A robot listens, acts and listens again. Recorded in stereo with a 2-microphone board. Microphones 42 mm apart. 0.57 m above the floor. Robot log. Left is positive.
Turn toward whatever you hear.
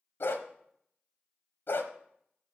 note: The dog barking: about 65° left or 115° left.
cmd yaw +65
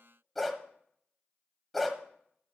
end: Found it: a dog barking, straight ahead.